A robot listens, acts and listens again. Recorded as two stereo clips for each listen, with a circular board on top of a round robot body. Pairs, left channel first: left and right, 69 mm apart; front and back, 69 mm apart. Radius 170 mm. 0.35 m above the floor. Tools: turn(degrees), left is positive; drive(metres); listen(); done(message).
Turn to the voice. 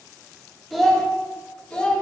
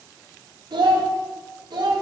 turn(degrees=165)
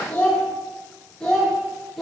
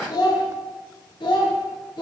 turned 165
done("Facing the child speaking, 1 to 2 m away.")